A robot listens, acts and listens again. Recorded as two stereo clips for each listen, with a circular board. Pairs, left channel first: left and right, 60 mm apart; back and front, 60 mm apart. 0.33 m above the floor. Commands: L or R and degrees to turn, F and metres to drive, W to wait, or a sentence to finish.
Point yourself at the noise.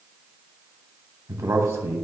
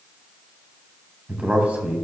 R60
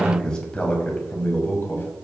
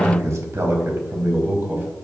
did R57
L50
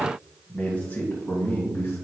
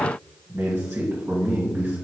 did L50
L35
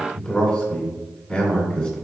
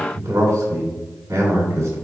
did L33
L10
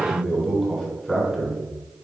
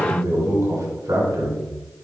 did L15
Facing the man speaking.